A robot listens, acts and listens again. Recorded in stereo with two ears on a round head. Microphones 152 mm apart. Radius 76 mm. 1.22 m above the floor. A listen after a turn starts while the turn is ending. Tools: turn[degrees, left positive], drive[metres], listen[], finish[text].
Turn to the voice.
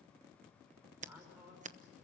Action: turn[-30]
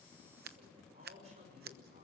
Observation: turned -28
Thought: So it is at 140° right.
Action: turn[-140]
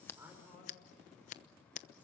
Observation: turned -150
Thought: Nothing new. It was at 10° left.
Action: turn[10]
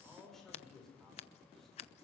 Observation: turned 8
Action: finish[Facing the man speaking, over 4 m away.]